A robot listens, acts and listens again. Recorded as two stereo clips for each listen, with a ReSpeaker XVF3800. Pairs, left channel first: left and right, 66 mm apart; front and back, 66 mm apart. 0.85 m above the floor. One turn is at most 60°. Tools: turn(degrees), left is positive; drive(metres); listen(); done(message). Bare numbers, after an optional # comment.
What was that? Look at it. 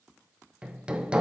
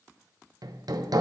# The hammering: 160° right.
turn(-60)
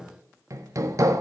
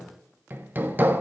# The hammering is now 120° right.
turn(-60)
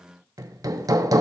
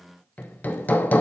# The hammering is now 65° right.
turn(-60)
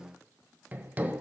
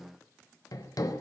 # The hammering is now 25° right.
turn(-25)
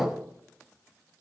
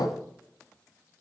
done("Found it: hammering, straight ahead.")